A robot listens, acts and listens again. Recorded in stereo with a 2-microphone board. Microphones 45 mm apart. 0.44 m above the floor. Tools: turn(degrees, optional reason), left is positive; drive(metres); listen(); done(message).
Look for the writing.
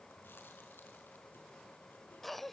listen()
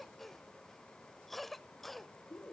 listen()
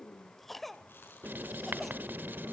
turn(degrees=-45, reason="The writing: about 45° right or 135° right.")
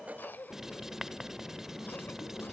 turn(degrees=-10, reason="So it is at 10° right.")
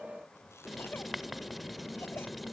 done("Facing the writing.")